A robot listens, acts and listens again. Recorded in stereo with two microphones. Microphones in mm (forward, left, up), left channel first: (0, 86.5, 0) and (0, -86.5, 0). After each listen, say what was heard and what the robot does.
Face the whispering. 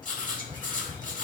The whispering: about 25° right or 155° right. Turn 25° right.
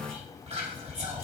So it is at 130° right. Turn 130° right.
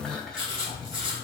Found it: whispering, straight ahead, 1 to 2 m away.